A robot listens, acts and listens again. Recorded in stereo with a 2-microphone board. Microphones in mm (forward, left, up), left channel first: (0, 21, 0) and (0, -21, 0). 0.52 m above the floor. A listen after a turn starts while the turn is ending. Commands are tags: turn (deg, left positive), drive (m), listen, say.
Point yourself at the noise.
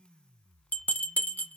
<turn deg="50"/>
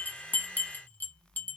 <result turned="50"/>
<turn deg="70"/>
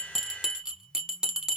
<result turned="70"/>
<turn deg="-15"/>
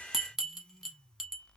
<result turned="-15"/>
<turn deg="-10"/>
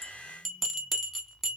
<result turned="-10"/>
<say>Found it: a bell, straight ahead, under 1 m away.</say>